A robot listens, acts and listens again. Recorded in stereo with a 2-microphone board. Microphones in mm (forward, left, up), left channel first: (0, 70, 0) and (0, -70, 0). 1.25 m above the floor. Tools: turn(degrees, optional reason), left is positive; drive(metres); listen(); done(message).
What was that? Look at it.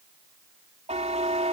turn(degrees=-55, reason="The buzzer: about 55° right or 125° right.")
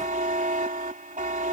turn(degrees=-70, reason="So it is at 70° right.")
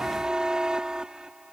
done("Facing the buzzer.")